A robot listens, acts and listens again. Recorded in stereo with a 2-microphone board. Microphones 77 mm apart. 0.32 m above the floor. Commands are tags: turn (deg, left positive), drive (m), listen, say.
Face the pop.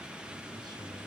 <listen/>
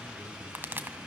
<turn deg="-25"/>
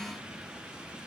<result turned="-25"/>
<listen/>
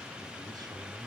<say>I heard a pop, but can't make it out now. It was about straight ahead or 130° right.</say>